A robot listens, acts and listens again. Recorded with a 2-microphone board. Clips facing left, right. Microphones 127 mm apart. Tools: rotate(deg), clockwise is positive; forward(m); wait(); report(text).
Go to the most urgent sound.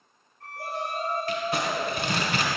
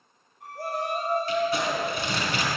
rotate(50)
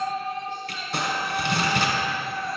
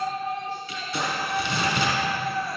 forward(1.0)
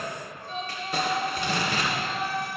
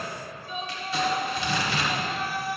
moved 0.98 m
rotate(10)
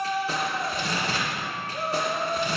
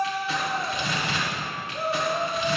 forward(1.0)
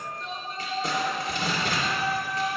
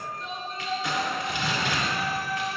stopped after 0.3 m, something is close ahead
report("I am next to the shout.")